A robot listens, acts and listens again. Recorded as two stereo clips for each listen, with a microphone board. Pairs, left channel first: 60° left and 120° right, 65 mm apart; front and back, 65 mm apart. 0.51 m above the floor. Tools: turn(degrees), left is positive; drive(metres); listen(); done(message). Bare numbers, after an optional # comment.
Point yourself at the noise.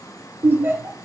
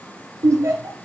# The laughter: 170° right.
turn(-170)
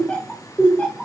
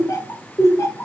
done("Found it: laughter, straight ahead.")